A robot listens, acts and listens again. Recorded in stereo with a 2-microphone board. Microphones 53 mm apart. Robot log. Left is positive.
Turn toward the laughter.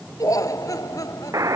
cmd yaw +90
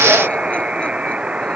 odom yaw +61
note: Nothing new. It was at 30° left.
cmd yaw +30
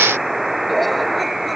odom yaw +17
note: Nothing new. It was at 10° left.
cmd yaw +10
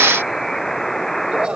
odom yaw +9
note: The laughter is now 15° right.
cmd yaw -15
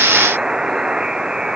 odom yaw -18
cmd idle
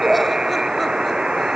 end: Found it: laughter, straight ahead.